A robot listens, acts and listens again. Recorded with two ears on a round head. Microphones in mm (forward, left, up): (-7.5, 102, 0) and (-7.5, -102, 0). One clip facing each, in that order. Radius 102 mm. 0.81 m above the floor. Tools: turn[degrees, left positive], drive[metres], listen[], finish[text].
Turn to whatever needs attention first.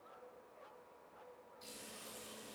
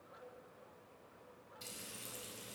Action: listen[]
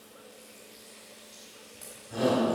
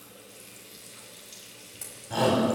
Action: turn[-90]
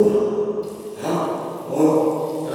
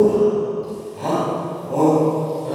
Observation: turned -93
Thought: So it is at 15° left.
Action: turn[15]
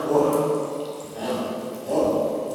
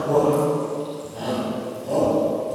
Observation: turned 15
Action: finish[Found it: a shout, straight ahead, over 4 m away.]